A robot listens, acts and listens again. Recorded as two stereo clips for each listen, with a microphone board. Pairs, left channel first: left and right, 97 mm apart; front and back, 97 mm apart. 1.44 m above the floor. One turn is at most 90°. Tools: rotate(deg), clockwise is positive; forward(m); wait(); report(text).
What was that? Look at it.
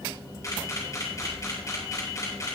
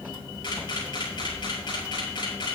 rotate(-35)
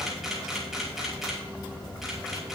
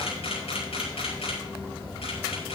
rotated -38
report("Facing the camera shutter, over 4 m away.")